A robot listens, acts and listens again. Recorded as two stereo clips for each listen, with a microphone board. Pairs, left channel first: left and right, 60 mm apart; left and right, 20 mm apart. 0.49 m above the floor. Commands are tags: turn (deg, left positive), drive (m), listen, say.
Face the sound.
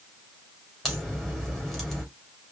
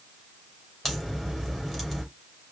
<turn deg="30"/>
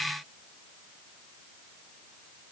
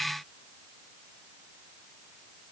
<listen/>
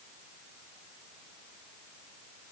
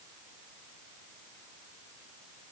<say>I heard a crack, but can't make it out now. It was about 25° right or 145° left.</say>